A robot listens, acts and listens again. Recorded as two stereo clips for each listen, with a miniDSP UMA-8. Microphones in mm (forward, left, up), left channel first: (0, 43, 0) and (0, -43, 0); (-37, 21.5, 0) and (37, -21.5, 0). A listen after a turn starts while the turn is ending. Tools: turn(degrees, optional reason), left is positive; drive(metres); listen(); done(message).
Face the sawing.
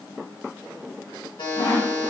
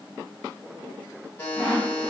turn(degrees=50, reason="The sawing: 50° left.")
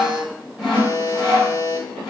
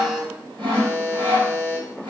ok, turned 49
done("Found it: sawing, straight ahead, 2 to 4 m away.")